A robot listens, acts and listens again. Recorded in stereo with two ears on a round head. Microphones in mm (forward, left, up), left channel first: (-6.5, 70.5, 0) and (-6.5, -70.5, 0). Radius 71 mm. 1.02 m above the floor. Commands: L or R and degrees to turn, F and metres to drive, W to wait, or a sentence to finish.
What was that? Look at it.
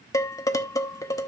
L20
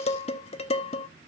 L140
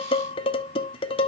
L35
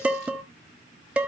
R10
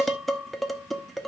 Facing the dishes clattering, 1 to 2 m away.